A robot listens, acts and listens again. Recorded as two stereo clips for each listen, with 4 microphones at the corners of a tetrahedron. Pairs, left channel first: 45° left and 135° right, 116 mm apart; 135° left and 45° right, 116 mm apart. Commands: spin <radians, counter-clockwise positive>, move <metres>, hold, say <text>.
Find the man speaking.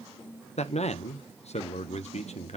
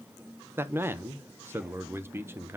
spin 0.44
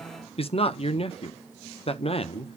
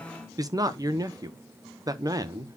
spin 0.17
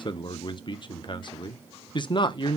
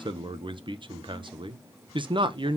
say Found it: a man speaking, straight ahead, under 1 m away.